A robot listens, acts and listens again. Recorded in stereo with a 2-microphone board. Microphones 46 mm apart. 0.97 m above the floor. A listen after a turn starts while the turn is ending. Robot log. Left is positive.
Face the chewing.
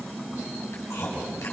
note: The chewing: about 75° left or 105° left.
cmd yaw +75
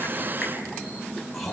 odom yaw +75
end: Found it: chewing, straight ahead.